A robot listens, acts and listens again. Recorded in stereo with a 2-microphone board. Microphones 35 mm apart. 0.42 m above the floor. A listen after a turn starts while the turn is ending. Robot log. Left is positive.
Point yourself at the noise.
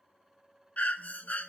note: The breathing: about 50° left or 130° left.
cmd yaw +50
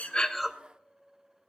end: Facing the breathing, under 1 m away.